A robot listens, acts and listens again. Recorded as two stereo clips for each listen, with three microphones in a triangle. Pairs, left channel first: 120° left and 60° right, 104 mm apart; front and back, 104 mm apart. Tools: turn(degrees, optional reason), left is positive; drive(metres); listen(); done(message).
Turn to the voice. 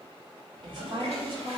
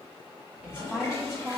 turn(degrees=-95, reason="The woman speaking: 95° right.")
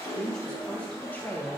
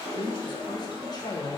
turn(degrees=50, reason="The woman speaking is now 50° left.")
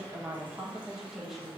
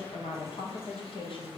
turn(degrees=30, reason="The woman speaking is now 30° left.")
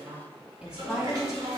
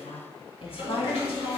turn(degrees=30, reason="The woman speaking is now 30° left.")
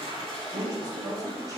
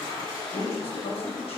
listen()
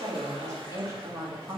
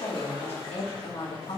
turn(degrees=-10, reason="The woman speaking is now 10° right.")
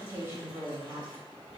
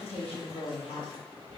done("Found it: a woman speaking, straight ahead.")